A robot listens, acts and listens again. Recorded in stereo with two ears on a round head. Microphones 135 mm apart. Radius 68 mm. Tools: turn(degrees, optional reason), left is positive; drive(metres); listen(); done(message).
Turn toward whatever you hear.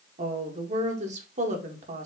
turn(degrees=-50, reason="The woman speaking: about 50° right or 130° right.")
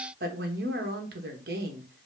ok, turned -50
turn(degrees=-75, reason="So it is at 75° right.")
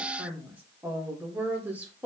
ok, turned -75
turn(degrees=-10, reason="The woman speaking is now 10° right.")
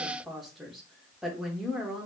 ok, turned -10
done("Found it: a woman speaking, straight ahead, 1 to 2 m away.")